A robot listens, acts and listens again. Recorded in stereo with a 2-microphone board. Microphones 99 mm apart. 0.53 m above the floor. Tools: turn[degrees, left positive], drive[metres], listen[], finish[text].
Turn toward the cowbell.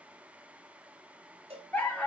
Action: turn[-90]
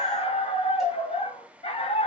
Action: listen[]
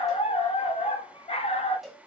Action: finish[Found it: a cowbell, straight ahead.]